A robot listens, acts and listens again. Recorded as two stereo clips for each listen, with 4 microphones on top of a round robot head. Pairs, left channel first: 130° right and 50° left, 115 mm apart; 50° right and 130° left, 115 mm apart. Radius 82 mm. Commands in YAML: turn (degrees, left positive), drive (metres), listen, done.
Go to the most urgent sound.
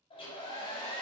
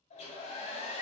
listen: true
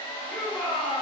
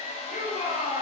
turn: -40
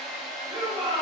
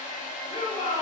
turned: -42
drive: 1.0
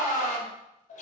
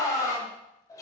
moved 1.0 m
drive: 1.0
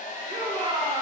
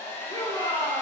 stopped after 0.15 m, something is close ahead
done: "I am next to the shout."